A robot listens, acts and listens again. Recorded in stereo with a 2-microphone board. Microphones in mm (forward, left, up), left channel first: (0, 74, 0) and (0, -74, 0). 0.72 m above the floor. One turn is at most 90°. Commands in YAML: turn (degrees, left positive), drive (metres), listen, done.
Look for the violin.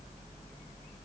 listen: true
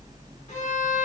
turn: 50
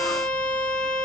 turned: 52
turn: 75
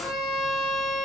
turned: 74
done: "Facing the violin, under 1 m away."